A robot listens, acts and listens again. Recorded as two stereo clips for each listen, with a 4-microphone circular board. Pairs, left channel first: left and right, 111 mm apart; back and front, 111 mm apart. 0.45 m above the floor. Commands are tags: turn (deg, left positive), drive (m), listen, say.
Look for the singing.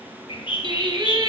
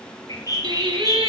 <turn deg="-40"/>
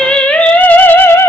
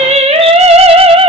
<turn deg="25"/>
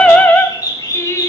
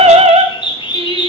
<turn deg="25"/>
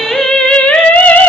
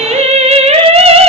<turn deg="15"/>
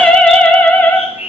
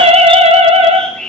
<turn deg="15"/>
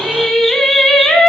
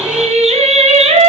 <say>Facing the singing.</say>